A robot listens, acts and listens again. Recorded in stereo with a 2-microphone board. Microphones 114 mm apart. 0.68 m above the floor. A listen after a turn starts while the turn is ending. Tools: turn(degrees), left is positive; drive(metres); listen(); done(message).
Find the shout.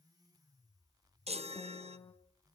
listen()
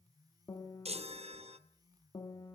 listen()
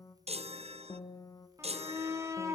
turn(degrees=-25)
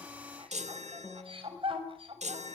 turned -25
turn(degrees=-125)
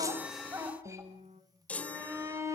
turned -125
turn(degrees=-25)
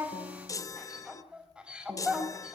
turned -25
turn(degrees=-10)
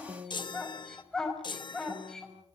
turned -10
done("Facing the shout.")